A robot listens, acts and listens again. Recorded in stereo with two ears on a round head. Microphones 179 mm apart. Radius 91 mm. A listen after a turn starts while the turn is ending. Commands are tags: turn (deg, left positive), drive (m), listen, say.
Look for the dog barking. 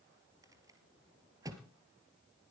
<listen/>
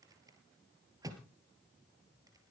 <listen/>
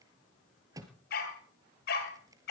<turn deg="55"/>
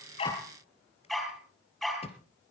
<say>Facing the dog barking, 2 to 4 m away.</say>